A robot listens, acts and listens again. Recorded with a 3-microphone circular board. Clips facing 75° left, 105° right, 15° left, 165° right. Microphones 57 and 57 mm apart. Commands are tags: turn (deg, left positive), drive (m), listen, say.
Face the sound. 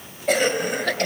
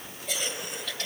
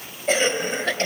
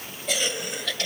<turn deg="60"/>
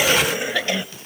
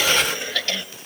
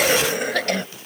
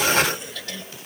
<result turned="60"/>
<say>Facing the cough.</say>